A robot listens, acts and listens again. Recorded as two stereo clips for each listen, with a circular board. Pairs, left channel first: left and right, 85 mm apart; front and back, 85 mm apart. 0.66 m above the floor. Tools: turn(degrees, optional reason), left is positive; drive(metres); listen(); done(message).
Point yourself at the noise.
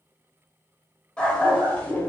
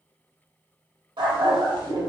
turn(degrees=160, reason="The dog barking: 160° left.")
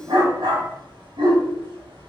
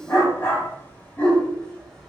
turn(degrees=-75, reason="The dog barking is now 75° right.")
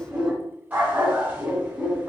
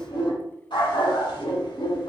turn(degrees=-20, reason="The dog barking is now 20° right.")
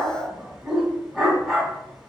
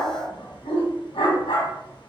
done("Found it: a dog barking, straight ahead.")